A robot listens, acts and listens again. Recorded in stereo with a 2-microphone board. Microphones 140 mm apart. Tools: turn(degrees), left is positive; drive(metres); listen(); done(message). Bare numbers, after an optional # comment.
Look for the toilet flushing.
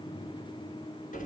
listen()
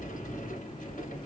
listen()
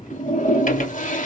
# The toilet flushing: about 65° left or 115° left.
turn(65)
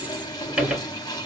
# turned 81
# So it is at 30° left.
turn(30)
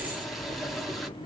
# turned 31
done("Facing the toilet flushing.")